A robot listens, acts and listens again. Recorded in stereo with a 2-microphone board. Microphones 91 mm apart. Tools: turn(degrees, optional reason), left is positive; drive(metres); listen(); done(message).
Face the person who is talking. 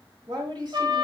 turn(degrees=-55, reason="The woman speaking: about 55° right or 125° right.")
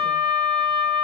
listen()
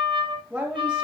turn(degrees=-15, reason="So it is at 15° right.")
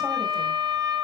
listen()
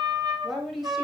done("Found it: a woman speaking, straight ahead, 1 to 2 m away.")